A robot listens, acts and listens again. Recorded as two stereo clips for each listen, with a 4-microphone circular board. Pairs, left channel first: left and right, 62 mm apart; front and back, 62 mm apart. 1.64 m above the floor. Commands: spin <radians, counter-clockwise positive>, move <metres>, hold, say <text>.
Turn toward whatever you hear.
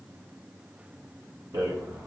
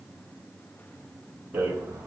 spin -2.01
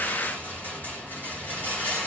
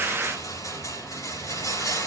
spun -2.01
spin 0.52
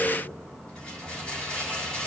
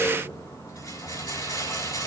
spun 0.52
spin 0.26
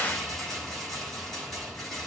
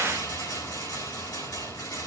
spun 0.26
say Found it: a rattle, straight ahead.